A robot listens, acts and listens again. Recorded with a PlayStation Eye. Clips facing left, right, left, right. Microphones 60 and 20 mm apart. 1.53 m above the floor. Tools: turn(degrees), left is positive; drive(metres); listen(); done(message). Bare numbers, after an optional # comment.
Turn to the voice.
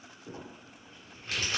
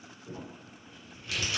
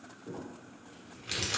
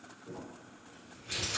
listen()
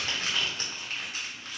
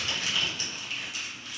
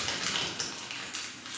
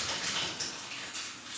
listen()
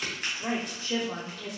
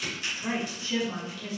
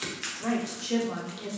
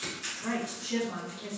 turn(90)
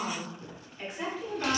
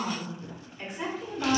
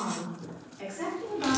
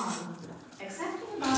# So it is at 10° right.
turn(-10)
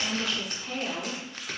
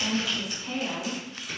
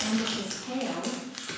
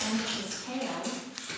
done("Facing the woman speaking.")